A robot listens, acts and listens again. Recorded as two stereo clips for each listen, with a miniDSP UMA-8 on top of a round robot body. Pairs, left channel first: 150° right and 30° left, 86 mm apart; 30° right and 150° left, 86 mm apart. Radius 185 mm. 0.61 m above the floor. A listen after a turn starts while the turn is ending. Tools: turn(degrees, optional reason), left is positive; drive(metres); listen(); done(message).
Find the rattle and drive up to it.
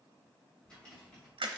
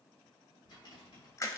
turn(degrees=-70, reason="The rattle: 70° right.")
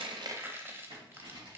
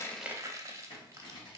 drive(metres=1.0)
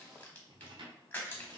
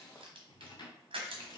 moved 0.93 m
drive(metres=1.0)
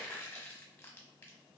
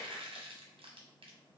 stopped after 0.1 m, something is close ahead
listen()
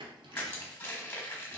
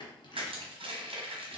done("I am next to the rattle.")